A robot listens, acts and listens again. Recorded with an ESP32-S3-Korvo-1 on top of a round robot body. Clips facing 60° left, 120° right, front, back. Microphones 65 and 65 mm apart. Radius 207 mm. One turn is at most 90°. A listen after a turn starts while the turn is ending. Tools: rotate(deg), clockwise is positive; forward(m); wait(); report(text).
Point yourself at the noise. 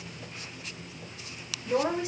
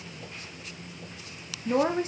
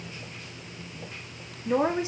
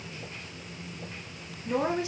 rotate(70)
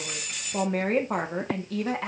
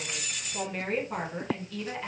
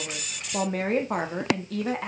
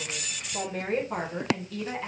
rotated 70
rotate(-35)
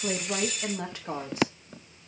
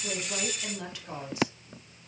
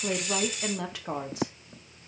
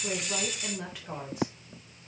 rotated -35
rotate(-10)
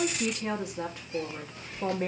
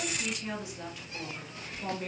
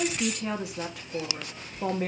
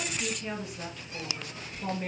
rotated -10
rotate(-10)
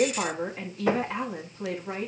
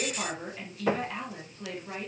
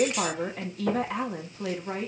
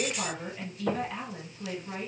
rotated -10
report("Facing the woman speaking.")